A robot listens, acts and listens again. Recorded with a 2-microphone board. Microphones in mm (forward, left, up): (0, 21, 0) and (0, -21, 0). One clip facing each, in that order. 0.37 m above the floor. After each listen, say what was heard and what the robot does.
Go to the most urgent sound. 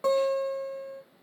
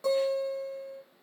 Keep listening.
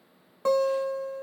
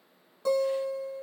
Keep listening.
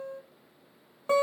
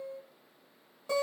I can't make out anything urgent to turn to.